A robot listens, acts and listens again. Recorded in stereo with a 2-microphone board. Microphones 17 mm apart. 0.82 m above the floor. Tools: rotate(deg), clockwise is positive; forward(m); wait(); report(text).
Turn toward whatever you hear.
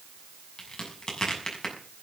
rotate(-50)
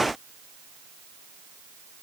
wait()
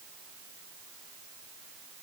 report("I heard a crack, but can't make it out now. It was about straight ahead or 80° left.")